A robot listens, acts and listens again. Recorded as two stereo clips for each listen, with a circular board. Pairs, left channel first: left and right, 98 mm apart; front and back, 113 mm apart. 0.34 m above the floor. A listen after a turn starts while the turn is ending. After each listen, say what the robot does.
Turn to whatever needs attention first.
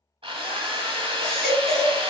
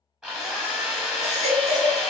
Turn 175° left.
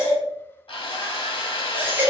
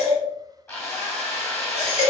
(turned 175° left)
Turn 20° right.
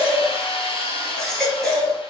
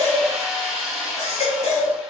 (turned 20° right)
Facing the baby crying.